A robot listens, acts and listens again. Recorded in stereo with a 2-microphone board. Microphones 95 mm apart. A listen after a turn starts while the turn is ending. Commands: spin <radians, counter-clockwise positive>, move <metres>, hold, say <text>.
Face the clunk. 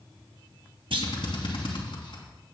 spin -1.57
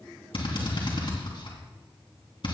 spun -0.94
spin -0.61
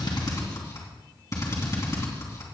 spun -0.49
spin -0.17
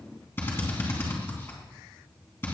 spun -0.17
say Facing where the clunk came from. I can't hear it now.